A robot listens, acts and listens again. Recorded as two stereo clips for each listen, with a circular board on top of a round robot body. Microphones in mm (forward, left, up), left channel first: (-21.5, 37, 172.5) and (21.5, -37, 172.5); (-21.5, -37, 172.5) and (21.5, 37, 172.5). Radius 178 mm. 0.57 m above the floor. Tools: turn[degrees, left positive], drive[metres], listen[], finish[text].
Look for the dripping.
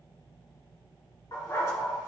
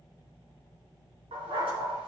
Action: listen[]
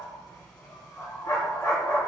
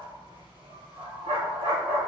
Action: listen[]
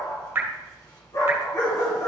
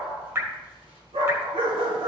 Action: finish[Facing the dripping.]